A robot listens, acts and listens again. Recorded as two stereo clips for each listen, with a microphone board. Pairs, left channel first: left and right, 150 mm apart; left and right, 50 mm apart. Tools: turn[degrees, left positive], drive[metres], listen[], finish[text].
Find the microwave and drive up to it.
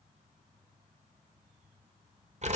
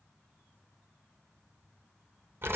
Action: listen[]
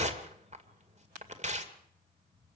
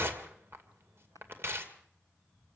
Action: listen[]
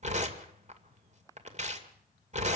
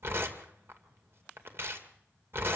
Action: finish[I can't make out a microwave to turn to.]